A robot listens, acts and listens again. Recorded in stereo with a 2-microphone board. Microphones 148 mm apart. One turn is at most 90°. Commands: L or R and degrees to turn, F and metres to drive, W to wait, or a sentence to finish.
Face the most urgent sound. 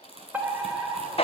R30
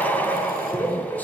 L20
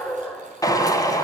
Facing the fire alarm, 2 to 4 m away.